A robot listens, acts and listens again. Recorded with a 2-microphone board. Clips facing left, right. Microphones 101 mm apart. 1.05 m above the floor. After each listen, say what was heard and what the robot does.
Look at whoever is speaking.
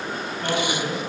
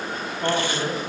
The man speaking: about 35° right or 145° right. Turn 35° right.
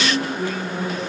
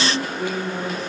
Facing the man speaking.